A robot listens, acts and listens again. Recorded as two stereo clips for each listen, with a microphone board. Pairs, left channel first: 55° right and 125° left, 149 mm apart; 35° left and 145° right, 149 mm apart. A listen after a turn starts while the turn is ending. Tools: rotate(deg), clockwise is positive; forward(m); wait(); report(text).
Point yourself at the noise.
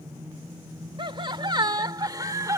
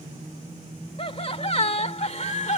rotate(-60)
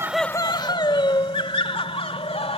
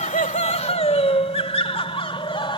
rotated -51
rotate(15)
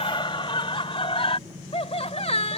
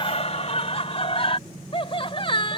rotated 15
rotate(15)
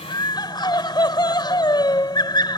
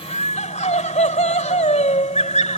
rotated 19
report("Found it: laughter, straight ahead.")